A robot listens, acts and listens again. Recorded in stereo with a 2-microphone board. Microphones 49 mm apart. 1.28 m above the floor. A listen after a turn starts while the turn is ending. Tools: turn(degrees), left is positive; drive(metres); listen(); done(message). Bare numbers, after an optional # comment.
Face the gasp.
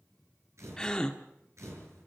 turn(30)
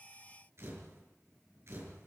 listen()
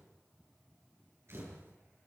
done("I heard a gasp, but can't make it out now. It was about 15° right or 135° left.")